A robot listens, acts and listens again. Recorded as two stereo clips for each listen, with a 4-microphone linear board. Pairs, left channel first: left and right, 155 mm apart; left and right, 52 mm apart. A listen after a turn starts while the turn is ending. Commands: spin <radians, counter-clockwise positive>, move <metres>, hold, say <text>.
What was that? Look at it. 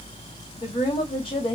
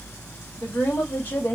spin 0.61
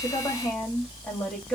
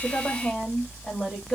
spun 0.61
say Facing the woman speaking, 2 to 4 m away.